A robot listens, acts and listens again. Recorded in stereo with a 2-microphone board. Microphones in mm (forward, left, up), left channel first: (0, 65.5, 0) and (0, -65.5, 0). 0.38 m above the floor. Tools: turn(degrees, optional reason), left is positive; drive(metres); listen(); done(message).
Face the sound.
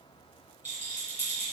turn(degrees=-55, reason="The rattle: about 55° right or 125° right.")
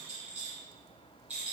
turn(degrees=-10, reason="So it is at 10° right.")
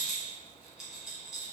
done("Facing the rattle, 1 to 2 m away.")